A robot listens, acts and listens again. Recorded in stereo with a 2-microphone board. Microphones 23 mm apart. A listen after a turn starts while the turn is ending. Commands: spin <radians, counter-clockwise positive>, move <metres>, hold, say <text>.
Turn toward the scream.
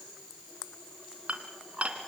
hold
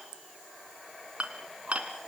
hold
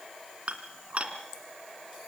say I can't make out a scream, only dishes clattering.